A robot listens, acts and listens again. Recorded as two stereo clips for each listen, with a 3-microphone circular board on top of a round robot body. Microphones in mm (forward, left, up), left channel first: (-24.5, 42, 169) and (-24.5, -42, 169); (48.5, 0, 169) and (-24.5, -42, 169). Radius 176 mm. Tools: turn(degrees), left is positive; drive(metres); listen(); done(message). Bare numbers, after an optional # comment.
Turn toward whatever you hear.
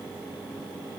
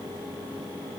listen()
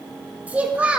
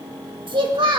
# The child speaking: 165° right.
turn(-165)
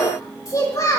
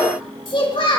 # The child speaking is now 40° left.
turn(40)
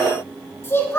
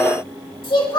# The child speaking is now 30° left.
turn(30)
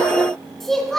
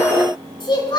done("Facing the child speaking, 2 to 4 m away.")